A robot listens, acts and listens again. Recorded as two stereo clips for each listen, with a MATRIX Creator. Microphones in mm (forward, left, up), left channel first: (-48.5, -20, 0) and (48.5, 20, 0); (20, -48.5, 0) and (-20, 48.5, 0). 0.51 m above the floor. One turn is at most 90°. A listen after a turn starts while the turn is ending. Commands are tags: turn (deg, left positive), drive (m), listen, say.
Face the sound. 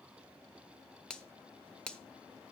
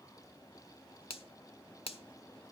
<turn deg="-80"/>
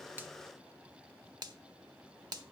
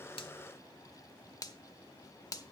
<turn deg="-20"/>
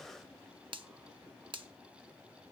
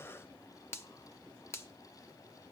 <say>Facing the finger snap, 1 to 2 m away.</say>